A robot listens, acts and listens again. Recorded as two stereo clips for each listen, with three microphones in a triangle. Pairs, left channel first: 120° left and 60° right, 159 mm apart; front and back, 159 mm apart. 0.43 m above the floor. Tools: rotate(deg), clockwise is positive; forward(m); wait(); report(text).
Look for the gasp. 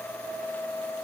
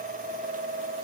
wait()
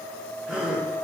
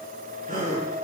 rotate(145)
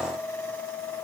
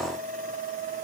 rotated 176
rotate(-30)
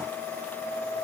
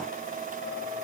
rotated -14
rotate(-15)
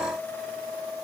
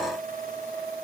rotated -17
report("Facing where the gasp came from. I can't hear it now.")